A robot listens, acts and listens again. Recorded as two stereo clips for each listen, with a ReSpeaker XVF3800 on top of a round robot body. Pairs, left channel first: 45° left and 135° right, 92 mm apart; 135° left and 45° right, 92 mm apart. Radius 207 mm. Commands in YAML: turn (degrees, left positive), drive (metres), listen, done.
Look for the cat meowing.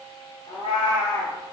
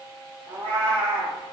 done: "Facing the cat meowing."